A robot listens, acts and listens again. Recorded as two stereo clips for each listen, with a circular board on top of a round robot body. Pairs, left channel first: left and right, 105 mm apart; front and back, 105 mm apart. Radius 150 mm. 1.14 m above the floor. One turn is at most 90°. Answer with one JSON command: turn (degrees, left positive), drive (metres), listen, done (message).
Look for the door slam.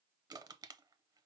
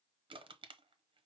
{"listen": true}
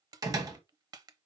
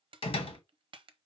{"turn": -35}
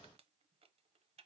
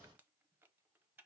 {"done": "Facing where the door slam came from. I can't hear it now."}